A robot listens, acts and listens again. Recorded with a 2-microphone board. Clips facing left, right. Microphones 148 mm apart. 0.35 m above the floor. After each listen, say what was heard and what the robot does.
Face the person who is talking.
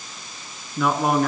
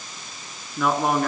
Turn 30° left.
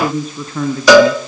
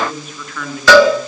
So it is at 145° left. Turn 145° left.
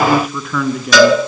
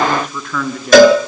Found it: a man speaking, straight ahead, 2 to 4 m away.